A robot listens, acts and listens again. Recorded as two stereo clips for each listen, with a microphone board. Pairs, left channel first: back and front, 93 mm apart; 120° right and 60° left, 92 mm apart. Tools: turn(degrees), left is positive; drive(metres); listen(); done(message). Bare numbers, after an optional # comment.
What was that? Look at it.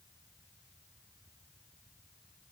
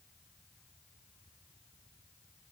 listen()
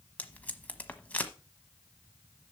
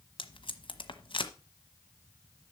# The tape being pulled: 105° right.
turn(-105)
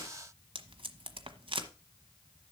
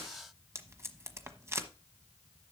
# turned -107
done("Facing the tape being pulled, 1 to 2 m away.")